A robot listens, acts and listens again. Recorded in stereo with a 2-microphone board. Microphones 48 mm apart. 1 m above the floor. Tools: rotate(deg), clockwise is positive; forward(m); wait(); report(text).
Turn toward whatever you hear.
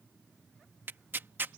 rotate(45)
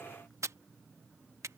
rotate(90)
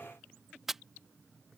report("Facing the tearing paper.")